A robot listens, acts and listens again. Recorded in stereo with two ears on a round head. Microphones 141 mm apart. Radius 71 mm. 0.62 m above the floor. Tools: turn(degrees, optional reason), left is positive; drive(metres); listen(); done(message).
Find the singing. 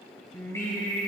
turn(degrees=20, reason="The singing: about 20° left or 160° left.")
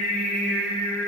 turn(degrees=30)
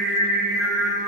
turn(degrees=30)
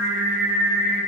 done("Found it: singing, straight ahead, 1 to 2 m away.")